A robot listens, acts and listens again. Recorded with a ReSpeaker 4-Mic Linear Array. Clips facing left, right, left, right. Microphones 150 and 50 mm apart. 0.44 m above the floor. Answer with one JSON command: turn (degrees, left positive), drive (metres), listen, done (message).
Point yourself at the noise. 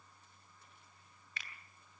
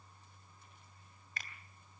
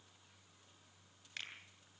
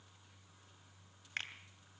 {"turn": -45}
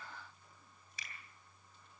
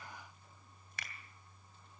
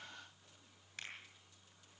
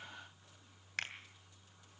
{"turn": -85}
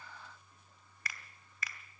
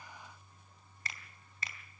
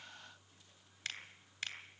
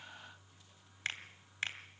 {"turn": -30}
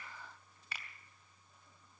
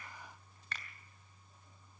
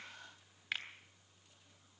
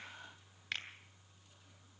{"turn": 10}
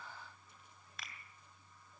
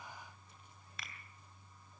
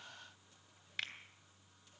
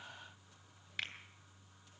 {"done": "Found it: a finger snap, straight ahead."}